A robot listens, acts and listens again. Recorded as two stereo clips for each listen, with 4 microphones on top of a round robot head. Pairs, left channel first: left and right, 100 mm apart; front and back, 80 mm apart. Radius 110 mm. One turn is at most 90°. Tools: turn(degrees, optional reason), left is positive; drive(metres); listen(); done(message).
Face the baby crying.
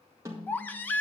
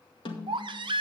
turn(degrees=90, reason="The baby crying: 160° left.")
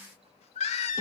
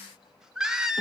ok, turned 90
turn(degrees=90, reason="The baby crying is now 95° left.")
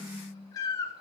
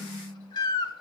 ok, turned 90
turn(degrees=25, reason="The baby crying is now 25° left.")
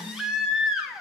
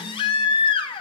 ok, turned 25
done("Found it: a baby crying, straight ahead, under 1 m away.")